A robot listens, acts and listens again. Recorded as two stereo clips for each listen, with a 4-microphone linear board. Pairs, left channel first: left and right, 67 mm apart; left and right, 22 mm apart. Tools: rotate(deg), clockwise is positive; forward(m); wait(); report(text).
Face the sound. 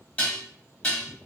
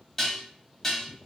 rotate(-20)
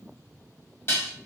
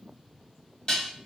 rotate(-140)
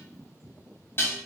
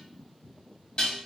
rotate(-45)
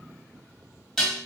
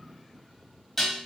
report("Facing the dishes clattering.")